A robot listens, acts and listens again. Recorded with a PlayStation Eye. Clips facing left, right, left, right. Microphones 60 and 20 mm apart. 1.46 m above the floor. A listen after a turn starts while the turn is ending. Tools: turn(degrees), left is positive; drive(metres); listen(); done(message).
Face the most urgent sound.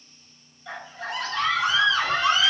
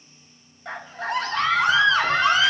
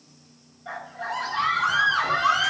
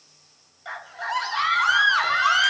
turn(degrees=-55)
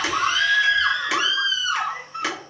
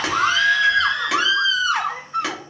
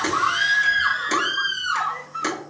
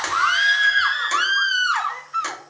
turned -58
turn(degrees=-65)
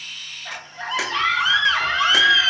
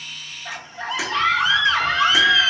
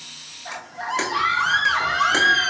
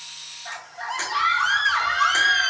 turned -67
done("Facing the scream.")